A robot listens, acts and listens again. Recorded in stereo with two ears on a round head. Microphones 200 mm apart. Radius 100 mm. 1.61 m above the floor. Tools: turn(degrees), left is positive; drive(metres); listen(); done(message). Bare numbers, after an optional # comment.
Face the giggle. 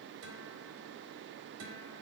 listen()
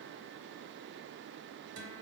listen()
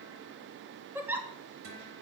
turn(-30)
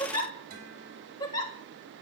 # So it is at 20° left.
turn(20)
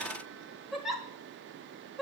done("Found it: a giggle, straight ahead, 1 to 2 m away.")